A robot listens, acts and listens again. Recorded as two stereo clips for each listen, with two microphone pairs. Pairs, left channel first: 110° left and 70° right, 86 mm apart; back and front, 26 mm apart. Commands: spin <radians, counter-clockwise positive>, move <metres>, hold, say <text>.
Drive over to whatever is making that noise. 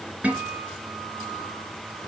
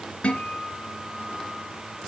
spin -2.53
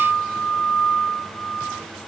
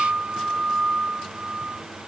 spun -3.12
spin 0.61
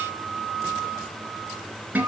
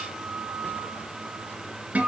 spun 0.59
move 1.0
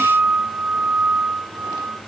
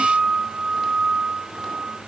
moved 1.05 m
move 1.0
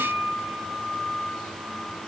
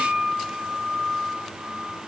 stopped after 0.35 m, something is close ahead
say Arrived at the guitar, straight ahead.